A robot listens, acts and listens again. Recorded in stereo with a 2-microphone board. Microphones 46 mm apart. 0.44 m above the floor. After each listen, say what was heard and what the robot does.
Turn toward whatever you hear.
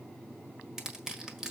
Turn 30° right.
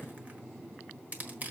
So it is at 135° right. Turn 135° right.
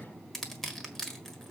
The crushing is now 10° left. Turn 10° left.
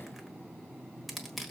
Found it: crushing, straight ahead, 1 to 2 m away.